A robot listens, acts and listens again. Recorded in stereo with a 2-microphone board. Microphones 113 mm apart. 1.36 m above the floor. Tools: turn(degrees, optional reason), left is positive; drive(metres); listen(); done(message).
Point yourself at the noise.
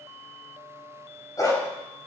turn(degrees=30, reason="The dog barking: about 30° left or 150° left.")
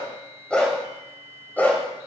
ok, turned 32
turn(degrees=15, reason="So it is at 15° left.")
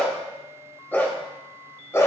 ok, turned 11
turn(degrees=25, reason="The dog barking is now 25° left.")
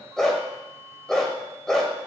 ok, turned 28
done("Facing the dog barking, 2 to 4 m away.")